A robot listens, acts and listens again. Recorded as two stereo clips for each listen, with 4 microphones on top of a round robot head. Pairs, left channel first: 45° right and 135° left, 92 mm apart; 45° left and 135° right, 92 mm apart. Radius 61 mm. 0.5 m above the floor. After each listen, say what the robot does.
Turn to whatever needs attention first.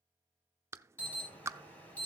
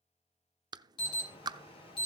Turn 25° left.
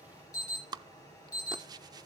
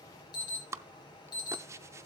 Turn 10° left.
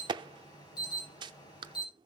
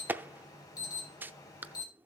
Facing the alarm, over 4 m away.